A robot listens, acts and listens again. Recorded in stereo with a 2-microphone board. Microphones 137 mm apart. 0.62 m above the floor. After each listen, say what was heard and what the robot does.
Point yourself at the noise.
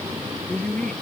Turn 30° left.
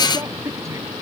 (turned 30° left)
So it is at 20° right. Turn 20° right.
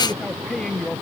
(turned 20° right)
Found it: a woman speaking, straight ahead.